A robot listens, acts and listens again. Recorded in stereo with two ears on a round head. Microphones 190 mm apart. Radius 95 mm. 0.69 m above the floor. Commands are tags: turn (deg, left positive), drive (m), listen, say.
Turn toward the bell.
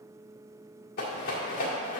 <listen/>
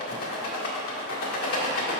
<listen/>
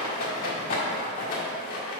<say>I can't make out a bell to turn to.</say>